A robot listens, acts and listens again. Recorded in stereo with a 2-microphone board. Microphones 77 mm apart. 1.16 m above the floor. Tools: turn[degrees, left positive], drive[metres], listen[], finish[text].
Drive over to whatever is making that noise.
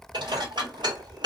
Action: turn[-90]
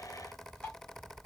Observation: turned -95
Thought: So it is at 20° left.
Action: turn[20]
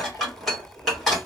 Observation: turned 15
Action: drive[1.0]
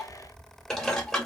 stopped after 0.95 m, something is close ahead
Action: finish[Arrived at the dishes clattering, straight ahead.]